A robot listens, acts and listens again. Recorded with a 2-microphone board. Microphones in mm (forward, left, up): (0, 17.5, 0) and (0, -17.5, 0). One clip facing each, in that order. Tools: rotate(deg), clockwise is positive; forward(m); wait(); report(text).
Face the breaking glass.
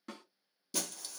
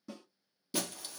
rotate(20)
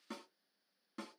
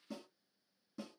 wait()
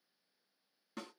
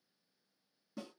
report("I heard breaking glass, but can't make it out now. It was about straight ahead or 140° right.")